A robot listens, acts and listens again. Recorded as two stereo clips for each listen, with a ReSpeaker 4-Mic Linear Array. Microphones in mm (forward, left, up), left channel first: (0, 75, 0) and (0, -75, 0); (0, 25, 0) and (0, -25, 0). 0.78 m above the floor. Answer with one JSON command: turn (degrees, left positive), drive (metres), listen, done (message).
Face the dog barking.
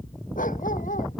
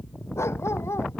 {"turn": 60}
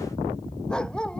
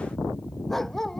{"done": "Facing the dog barking."}